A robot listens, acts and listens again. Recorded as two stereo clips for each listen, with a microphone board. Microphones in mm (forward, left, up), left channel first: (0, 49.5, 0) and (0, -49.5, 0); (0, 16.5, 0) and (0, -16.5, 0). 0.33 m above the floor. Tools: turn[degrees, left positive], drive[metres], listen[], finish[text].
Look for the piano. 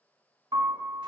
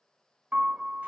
Thought: The piano: about 50° right or 130° right.
Action: turn[-50]
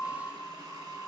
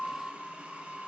Action: finish[Found it: a piano, straight ahead.]